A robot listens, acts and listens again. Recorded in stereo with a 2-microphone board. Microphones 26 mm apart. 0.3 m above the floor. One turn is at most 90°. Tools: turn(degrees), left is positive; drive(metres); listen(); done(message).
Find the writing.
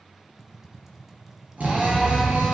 turn(degrees=15)
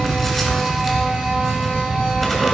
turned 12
done("Found it: writing, straight ahead, 1 to 2 m away.")